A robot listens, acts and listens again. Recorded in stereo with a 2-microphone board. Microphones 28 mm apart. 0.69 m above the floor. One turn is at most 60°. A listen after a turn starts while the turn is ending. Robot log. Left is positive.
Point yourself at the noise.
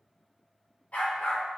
note: The dog barking: about 70° left or 110° left.
cmd yaw +60
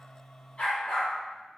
note: So it is at 30° left.
cmd yaw +30
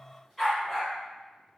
end: Facing the dog barking.